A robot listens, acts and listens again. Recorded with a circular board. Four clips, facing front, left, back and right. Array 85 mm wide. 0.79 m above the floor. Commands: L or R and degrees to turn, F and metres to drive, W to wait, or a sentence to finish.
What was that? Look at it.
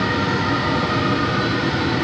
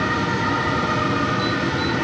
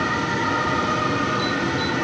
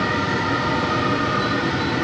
W
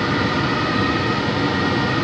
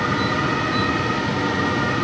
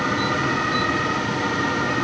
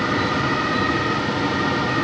W
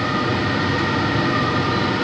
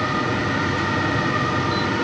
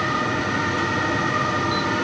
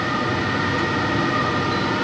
I can't make out anything.